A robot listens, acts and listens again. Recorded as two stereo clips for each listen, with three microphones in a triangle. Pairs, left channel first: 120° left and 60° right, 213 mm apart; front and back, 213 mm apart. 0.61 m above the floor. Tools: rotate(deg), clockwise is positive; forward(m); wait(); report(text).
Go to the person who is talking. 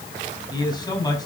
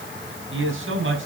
rotate(170)
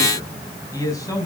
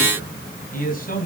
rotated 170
rotate(-45)
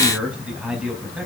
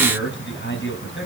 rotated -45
rotate(-25)
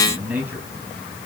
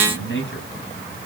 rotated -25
rotate(-20)
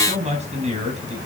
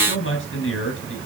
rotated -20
forward(1.0)
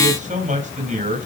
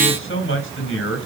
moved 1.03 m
rotate(10)
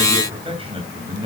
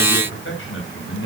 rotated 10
forward(1.0)
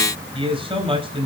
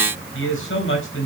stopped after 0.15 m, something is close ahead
report("Blocked. The man speaking is further on, straight ahead.")